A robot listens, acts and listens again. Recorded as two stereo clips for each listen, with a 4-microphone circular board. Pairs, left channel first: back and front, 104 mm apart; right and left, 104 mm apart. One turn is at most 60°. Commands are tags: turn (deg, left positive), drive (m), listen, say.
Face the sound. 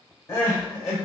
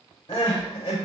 <turn deg="-60"/>
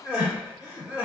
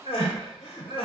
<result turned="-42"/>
<turn deg="-60"/>
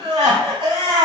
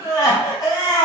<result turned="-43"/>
<turn deg="-40"/>
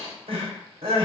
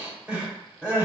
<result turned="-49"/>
<turn deg="10"/>
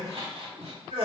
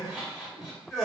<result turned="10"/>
<say>Facing the crying.</say>